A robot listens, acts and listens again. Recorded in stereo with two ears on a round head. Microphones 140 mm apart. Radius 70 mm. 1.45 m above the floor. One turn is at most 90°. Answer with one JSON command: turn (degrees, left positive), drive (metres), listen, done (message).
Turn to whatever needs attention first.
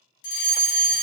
{"turn": 60}
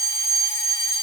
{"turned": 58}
{"turn": 20}
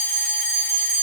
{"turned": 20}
{"done": "Facing the fire alarm, 1 to 2 m away."}